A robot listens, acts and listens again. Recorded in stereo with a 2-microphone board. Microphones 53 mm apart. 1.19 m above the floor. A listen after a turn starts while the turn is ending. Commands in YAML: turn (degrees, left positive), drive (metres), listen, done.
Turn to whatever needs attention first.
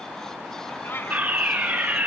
turn: -30
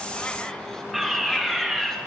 done: "Found it: a fire alarm, straight ahead, 2 to 4 m away."